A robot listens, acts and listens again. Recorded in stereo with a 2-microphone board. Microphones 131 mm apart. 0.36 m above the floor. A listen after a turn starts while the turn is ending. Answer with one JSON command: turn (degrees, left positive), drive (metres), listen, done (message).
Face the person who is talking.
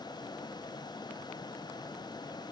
{"listen": true}
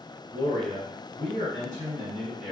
{"turn": -60}
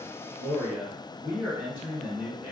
{"turn": -20}
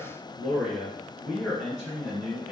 {"done": "Found it: a man speaking, straight ahead."}